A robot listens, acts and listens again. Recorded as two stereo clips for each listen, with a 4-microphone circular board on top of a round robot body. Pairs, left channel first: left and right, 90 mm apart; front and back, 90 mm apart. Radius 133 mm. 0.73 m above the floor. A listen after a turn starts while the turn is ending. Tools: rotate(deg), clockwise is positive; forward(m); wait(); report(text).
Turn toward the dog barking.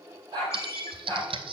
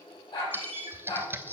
rotate(40)
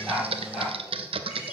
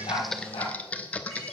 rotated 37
wait()
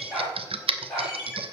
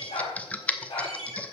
rotate(-10)
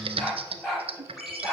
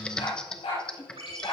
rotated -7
rotate(-10)
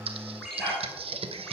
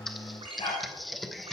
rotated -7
rotate(-10)
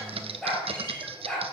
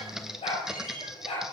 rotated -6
report("Found it: a dog barking, straight ahead, over 4 m away.")